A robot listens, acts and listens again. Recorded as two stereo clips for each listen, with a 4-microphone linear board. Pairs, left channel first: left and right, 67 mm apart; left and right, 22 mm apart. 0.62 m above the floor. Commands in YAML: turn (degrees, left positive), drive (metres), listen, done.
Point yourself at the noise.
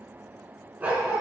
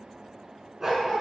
turn: -20
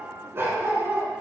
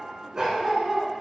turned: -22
turn: -35
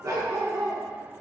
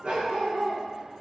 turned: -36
turn: -115
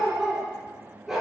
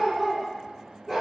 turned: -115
done: "Found it: a dog barking, straight ahead, over 4 m away."